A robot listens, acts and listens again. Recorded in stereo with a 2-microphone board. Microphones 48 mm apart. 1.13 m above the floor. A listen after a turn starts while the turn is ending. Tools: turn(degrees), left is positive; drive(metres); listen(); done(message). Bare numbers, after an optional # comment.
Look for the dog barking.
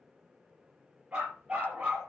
# The dog barking: about 25° right or 155° right.
turn(-25)
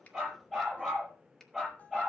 done("Facing the dog barking, over 4 m away.")